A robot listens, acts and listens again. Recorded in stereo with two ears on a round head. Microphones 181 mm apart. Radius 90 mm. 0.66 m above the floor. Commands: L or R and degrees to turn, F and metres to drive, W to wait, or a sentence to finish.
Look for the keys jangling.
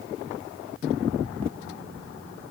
W
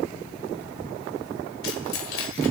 L70
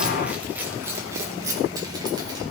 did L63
R20
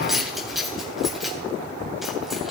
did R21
Facing the keys jangling.